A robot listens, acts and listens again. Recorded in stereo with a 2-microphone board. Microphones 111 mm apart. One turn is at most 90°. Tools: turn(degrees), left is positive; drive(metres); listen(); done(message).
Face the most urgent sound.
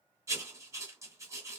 listen()
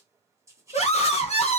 turn(degrees=75)
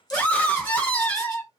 turn(degrees=15)
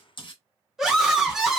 done("Found it: a scream, straight ahead.")